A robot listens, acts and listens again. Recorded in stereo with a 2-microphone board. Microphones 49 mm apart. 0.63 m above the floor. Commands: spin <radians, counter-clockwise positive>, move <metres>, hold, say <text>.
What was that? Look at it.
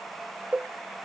spin -0.44
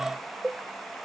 say Facing the cowbell.